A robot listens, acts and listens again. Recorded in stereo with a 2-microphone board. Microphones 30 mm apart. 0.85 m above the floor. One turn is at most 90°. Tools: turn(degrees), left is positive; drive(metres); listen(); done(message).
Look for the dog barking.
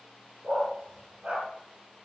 turn(degrees=-50)
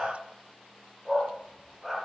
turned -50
done("Found it: a dog barking, straight ahead, over 4 m away.")